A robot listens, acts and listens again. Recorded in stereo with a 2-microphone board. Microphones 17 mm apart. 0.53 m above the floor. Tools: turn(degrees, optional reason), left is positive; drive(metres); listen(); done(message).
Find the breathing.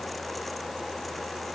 listen()
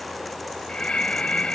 turn(degrees=65, reason="The breathing: about 65° left or 115° left.")
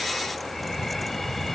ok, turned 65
turn(degrees=10, reason="So it is at 10° left.")
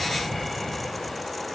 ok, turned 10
done("Facing the breathing.")